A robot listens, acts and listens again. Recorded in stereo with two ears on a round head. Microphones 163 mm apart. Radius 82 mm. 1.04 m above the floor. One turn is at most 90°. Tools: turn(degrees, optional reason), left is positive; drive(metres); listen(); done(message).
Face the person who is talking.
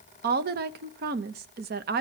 turn(degrees=-55, reason="The woman speaking: about 55° right or 125° right.")
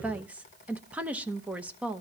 turn(degrees=-10, reason="So it is at 10° right.")
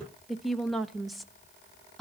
done("Facing the woman speaking.")